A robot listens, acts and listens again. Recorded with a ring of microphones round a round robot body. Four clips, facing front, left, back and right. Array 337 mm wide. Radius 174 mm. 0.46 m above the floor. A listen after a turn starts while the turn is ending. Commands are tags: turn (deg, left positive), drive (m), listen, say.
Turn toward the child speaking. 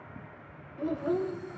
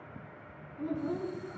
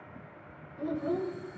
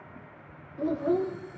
<turn deg="-75"/>
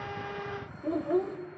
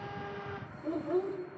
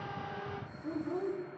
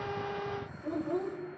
<say>Found it: a child speaking, straight ahead.</say>